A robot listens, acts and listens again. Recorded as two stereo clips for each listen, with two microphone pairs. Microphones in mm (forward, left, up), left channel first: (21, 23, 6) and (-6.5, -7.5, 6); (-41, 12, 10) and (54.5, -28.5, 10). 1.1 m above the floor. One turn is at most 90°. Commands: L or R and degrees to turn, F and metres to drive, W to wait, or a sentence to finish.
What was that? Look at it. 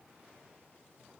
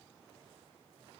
W
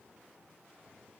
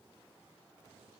W
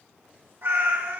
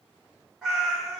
R90
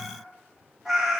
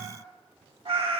R50
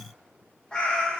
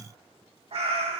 R30
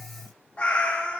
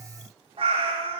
Facing the cat meowing.